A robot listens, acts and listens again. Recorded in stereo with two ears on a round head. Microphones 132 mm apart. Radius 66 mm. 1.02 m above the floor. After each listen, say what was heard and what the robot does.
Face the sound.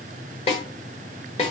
The snare drum: about 45° left or 135° left. Turn 45° left.
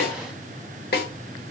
So it is at 90° left. Turn 90° left.
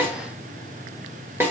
The snare drum is now 15° right. Turn 15° right.
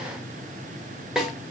Facing the snare drum.